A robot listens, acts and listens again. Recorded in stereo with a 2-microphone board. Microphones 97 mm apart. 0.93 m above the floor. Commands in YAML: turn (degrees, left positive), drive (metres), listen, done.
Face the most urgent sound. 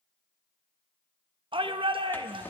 turn: -65
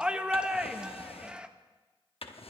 turn: -10
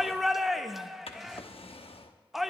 done: "Facing the shout."